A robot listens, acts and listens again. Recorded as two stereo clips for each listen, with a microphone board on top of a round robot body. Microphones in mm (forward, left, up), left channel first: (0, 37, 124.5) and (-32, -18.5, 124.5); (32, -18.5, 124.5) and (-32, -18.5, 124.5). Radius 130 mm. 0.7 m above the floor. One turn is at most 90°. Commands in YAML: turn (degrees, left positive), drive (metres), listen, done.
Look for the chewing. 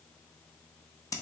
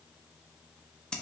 listen: true
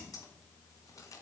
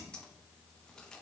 listen: true
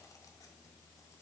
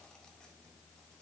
done: "I can't make out chewing to turn to."